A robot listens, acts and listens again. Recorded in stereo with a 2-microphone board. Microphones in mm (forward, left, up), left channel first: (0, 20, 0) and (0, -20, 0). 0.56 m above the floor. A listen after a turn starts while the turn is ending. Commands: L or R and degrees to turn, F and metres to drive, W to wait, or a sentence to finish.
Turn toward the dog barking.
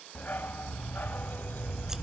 L50
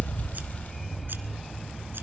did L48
Found it: a dog barking, straight ahead, under 1 m away.